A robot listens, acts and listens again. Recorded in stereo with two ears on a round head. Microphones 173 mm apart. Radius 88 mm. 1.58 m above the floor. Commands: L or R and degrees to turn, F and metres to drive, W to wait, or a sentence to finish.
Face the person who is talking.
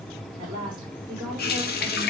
R20
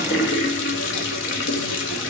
W
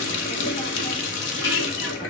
W
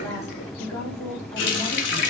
L15
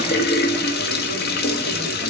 W
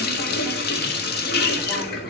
W
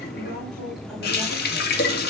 Found it: a woman speaking, straight ahead, over 4 m away.